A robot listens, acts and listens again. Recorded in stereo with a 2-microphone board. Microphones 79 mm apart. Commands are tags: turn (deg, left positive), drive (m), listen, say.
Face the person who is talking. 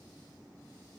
<listen/>
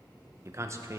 <turn deg="-35"/>
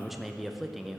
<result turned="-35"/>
<say>Found it: a man speaking, straight ahead, under 1 m away.</say>